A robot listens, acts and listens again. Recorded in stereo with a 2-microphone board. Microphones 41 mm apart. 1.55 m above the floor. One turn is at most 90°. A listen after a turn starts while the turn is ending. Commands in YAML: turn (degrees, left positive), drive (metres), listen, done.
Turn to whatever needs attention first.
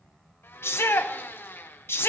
turn: 70
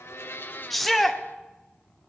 done: "Found it: a shout, straight ahead."